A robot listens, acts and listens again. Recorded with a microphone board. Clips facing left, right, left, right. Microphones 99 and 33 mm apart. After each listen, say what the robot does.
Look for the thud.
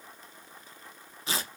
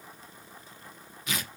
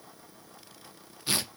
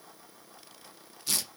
Keep listening.
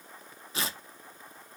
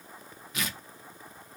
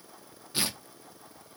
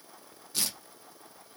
Keep listening.
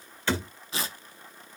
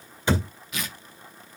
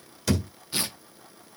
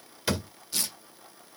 Turn 15° right.
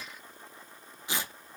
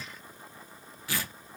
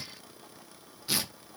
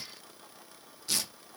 Keep listening.
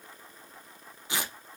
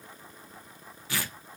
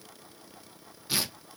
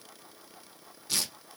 I heard a thud, but can't make it out now. It was about straight ahead or 150° right.